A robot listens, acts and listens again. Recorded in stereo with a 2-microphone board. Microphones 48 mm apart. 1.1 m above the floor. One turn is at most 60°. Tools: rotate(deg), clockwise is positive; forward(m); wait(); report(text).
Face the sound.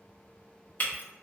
rotate(-35)
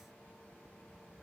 wait()
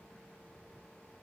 report("I heard breaking glass, but can't make it out now. It was about straight ahead or 110° left.")